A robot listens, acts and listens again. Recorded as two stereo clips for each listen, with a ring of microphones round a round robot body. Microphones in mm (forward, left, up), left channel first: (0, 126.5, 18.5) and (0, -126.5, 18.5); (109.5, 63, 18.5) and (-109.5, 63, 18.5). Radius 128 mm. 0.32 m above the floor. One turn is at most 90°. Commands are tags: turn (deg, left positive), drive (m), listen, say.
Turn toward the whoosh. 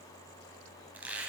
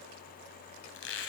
<listen/>
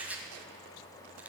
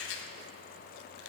<listen/>
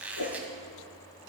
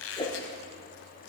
<turn deg="70"/>
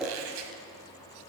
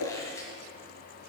<say>Found it: a whoosh, straight ahead, 2 to 4 m away.</say>